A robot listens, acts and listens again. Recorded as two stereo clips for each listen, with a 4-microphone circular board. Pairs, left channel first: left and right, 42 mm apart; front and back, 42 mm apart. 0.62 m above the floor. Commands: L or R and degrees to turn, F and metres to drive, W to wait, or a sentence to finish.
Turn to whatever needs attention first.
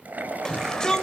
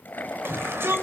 L165
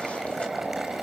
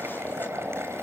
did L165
W
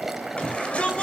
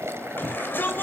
L35
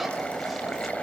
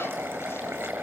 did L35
W
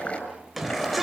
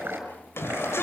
Found it: a shout, straight ahead.